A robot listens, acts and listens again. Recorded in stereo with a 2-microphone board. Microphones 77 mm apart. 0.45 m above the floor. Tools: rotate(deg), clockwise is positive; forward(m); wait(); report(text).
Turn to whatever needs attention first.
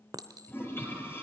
wait()
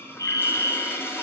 rotate(-50)
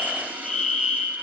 rotate(-10)
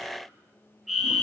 report("Facing the fire alarm.")